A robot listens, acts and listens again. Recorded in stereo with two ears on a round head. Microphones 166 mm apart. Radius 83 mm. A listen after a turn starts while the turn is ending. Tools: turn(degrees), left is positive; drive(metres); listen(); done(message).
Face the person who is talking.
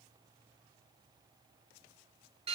listen()
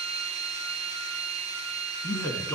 turn(degrees=30)
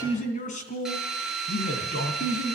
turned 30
turn(degrees=135)
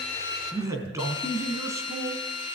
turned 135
turn(degrees=-20)
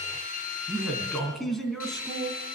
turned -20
done("Facing the man speaking.")